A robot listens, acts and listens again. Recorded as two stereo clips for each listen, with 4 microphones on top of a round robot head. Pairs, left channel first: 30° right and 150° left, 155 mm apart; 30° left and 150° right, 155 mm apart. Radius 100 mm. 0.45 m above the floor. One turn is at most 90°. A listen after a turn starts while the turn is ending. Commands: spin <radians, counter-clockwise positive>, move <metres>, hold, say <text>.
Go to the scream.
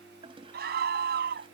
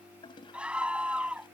spin 1.57
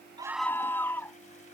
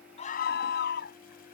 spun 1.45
spin 0.79
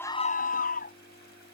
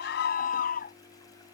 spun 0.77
move 1.0
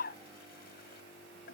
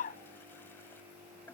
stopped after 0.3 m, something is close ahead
say Something is in my way. I am facing the scream but have not reached it.